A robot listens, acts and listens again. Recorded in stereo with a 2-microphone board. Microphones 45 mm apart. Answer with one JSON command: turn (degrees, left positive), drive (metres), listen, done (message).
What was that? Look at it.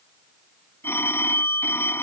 {"turn": 55}
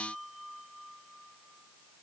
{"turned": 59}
{"listen": true}
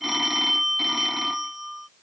{"done": "Facing the phone ringing."}